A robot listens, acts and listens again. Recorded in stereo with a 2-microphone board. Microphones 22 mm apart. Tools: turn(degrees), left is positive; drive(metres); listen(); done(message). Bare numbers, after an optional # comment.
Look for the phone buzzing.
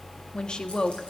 listen()
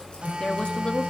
# The phone buzzing: about 75° right or 105° right.
turn(-75)
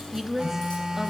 # So it is at 35° right.
turn(-35)
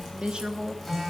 done("Facing the phone buzzing.")